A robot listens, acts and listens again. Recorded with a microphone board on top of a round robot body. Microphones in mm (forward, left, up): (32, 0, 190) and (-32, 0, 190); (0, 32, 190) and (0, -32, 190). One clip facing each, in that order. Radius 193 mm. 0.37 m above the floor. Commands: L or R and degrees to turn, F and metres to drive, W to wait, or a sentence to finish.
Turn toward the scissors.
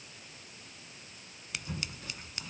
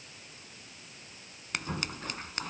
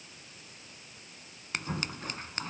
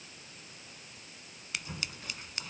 L140
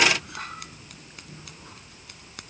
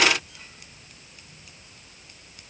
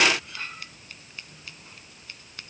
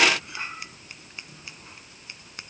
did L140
R20
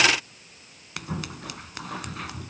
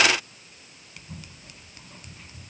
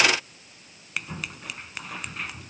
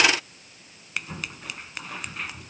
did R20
Found it: scissors, straight ahead.